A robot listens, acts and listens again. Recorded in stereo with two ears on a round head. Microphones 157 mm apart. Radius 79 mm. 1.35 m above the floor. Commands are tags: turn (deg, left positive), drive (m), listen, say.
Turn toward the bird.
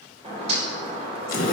<turn deg="-35"/>
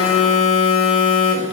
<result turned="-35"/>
<listen/>
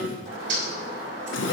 <turn deg="-105"/>
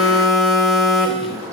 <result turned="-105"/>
<turn deg="-15"/>
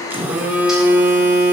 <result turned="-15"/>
<listen/>
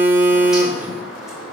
<say>Found it: a bird, straight ahead.</say>